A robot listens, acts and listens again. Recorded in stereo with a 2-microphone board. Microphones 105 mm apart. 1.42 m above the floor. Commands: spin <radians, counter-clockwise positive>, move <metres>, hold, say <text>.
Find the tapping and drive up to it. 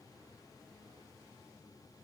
hold
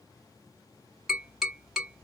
spin -0.52
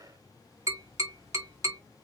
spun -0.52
spin -2.53
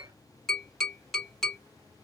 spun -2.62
move 1.0
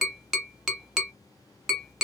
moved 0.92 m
move 1.0
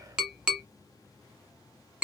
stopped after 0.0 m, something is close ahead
say Arrived at the tapping, straight ahead.